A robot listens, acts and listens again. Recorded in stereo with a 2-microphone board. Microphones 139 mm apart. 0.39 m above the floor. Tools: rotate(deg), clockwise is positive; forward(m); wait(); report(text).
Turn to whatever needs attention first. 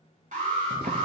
rotate(60)
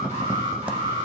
rotate(55)
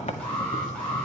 rotate(-10)
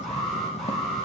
report("Found it: an alarm, straight ahead, over 4 m away.")